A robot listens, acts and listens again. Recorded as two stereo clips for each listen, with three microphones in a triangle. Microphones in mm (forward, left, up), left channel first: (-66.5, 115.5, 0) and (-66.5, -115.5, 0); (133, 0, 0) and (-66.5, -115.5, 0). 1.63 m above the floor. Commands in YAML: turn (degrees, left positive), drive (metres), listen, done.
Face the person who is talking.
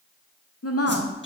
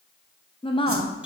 turn: 95
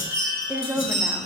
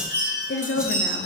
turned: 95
turn: -10
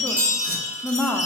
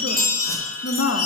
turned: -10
done: "Facing the woman speaking, under 1 m away."